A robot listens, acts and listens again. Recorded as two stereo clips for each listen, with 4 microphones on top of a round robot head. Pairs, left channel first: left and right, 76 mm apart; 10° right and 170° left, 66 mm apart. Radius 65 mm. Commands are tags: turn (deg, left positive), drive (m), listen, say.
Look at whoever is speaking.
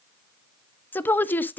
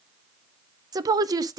<turn deg="155"/>
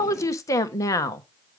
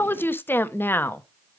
<turn deg="45"/>
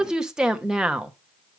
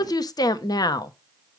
<turn deg="-10"/>
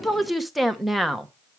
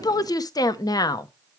<say>Facing the woman speaking, 1 to 2 m away.</say>